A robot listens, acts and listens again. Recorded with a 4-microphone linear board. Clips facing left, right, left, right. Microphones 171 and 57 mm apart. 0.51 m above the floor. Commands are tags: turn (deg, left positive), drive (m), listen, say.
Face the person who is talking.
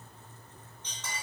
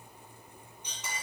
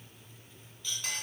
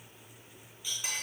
<listen/>
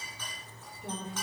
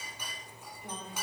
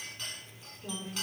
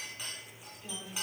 <turn deg="35"/>
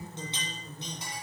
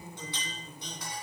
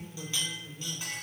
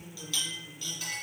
<turn deg="100"/>
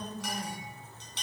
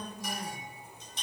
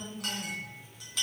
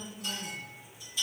<turn deg="25"/>
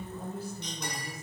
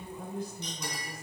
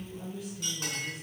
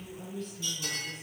<turn deg="10"/>
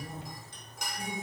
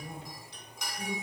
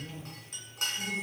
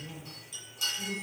<say>Found it: a woman speaking, straight ahead, 1 to 2 m away.</say>